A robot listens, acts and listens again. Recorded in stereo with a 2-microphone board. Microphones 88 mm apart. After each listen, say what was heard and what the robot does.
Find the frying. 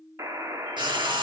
The frying: about 60° right or 120° right. Turn 60° right.
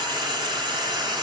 So it is at 55° right. Turn 55° right.
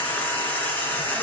The frying is now 20° left. Turn 20° left.
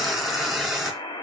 Found it: frying, straight ahead, 2 to 4 m away.